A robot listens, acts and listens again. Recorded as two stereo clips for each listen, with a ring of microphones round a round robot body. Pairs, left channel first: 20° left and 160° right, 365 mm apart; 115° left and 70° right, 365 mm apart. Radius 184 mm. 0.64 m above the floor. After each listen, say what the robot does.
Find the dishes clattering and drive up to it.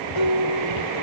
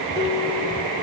Drive 1.0 m forward.
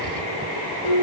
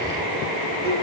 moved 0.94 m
Drive 1.0 m forward.
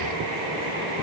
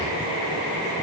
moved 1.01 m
Keep listening.
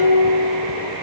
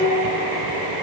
Drive 1.0 m forward.
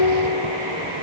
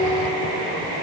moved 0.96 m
Turn 15° left.
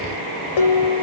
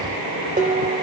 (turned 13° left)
Drive 1.0 m forward.
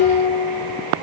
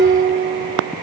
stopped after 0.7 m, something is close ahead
Arrived at the dishes clattering, straight ahead.